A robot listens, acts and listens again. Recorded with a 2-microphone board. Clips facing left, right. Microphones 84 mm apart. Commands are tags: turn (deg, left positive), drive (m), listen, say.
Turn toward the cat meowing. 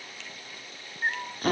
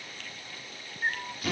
<turn deg="25"/>
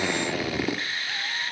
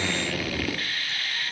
<turn deg="120"/>
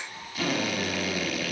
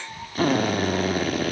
<turn deg="-55"/>
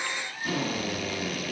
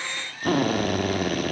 <listen/>
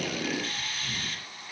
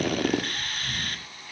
<turn deg="10"/>
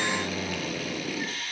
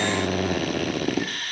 <listen/>
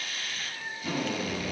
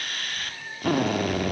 <say>Found it: a cat meowing, straight ahead.</say>